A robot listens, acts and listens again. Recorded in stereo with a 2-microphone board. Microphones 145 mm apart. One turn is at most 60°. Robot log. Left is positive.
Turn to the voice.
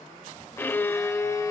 cmd idle
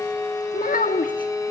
note: The child speaking: about 70° left or 110° left.
cmd yaw +60
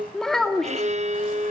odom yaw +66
end: Facing the child speaking, 1 to 2 m away.